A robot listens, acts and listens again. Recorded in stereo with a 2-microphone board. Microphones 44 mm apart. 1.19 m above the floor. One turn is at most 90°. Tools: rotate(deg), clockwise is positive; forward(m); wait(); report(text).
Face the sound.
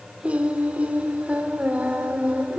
rotate(35)
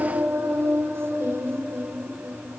rotate(90)
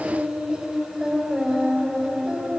rotate(20)
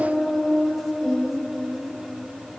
report("Found it: singing, straight ahead, over 4 m away.")